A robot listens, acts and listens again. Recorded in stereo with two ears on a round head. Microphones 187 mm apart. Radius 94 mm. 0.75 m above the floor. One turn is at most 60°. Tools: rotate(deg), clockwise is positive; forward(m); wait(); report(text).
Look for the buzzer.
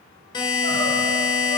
rotate(-20)
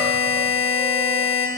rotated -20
rotate(-60)
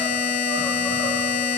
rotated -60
rotate(-60)
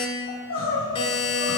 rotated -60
rotate(-30)
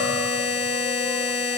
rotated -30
rotate(-25)
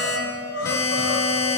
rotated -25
rotate(-15)
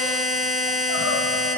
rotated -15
report("Facing the buzzer.")